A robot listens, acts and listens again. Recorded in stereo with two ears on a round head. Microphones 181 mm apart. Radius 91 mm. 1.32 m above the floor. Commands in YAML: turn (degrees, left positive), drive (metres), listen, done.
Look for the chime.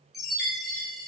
turn: 30
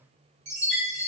turn: -35
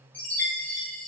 done: "Found it: a chime, straight ahead."